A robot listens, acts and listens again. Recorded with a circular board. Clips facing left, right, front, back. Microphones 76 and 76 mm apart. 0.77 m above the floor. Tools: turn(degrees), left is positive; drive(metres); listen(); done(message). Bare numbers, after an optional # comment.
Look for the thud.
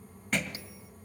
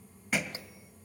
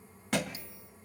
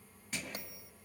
# The thud: 10° right.
turn(-10)
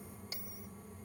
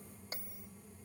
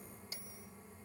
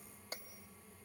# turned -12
done("I heard a thud from this way, but can't make it out now.")